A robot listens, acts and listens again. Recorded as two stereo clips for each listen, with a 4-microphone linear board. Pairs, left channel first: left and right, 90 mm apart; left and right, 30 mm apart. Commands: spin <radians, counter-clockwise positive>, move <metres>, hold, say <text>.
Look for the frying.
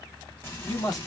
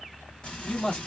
spin 0.52
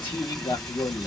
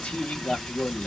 say Found it: frying, straight ahead, 1 to 2 m away.